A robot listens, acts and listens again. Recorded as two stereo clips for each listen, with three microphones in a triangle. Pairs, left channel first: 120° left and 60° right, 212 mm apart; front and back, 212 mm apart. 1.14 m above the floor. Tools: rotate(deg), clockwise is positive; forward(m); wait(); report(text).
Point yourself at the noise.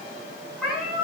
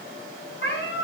rotate(-30)
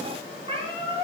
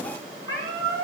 report("Facing the cat meowing, over 4 m away.")